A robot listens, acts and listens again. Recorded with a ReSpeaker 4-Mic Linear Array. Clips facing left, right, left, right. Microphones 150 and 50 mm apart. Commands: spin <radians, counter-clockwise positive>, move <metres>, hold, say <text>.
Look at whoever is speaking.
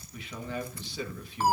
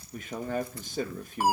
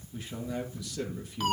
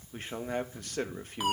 spin -0.79
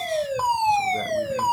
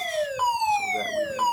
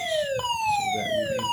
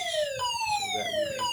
hold
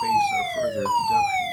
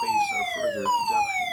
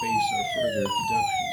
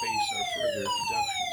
hold
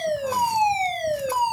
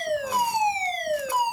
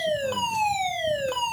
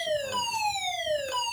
say I heard a man speaking, but can't make it out now. It was about straight ahead or 90° right.